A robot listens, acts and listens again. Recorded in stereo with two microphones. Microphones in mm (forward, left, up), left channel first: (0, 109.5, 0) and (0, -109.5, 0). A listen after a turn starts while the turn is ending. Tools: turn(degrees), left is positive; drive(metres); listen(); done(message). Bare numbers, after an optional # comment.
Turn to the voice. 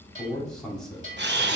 turn(30)
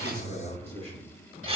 # So it is at 30° right.
turn(-30)
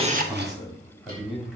done("Found it: a man speaking, straight ahead.")